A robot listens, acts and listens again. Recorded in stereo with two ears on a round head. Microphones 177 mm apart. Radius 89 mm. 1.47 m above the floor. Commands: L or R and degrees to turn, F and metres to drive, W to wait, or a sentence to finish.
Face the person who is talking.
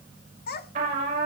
L50
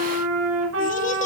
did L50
W
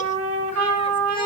W
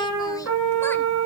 I heard a child speaking, but can't make it out now. It was about straight ahead or 80° left.